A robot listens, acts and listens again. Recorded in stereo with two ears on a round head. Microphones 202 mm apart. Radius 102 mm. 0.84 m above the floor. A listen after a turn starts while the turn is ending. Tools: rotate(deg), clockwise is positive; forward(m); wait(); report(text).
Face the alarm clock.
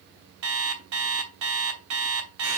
rotate(75)
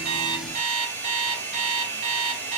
rotate(30)
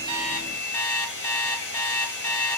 rotate(-15)
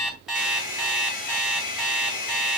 report("Found it: an alarm clock, straight ahead, 2 to 4 m away.")